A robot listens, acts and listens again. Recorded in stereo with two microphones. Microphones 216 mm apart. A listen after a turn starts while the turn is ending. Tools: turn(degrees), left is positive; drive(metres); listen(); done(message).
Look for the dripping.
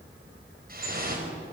turn(degrees=-45)
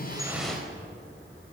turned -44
listen()
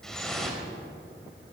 done("Facing the dripping, over 4 m away.")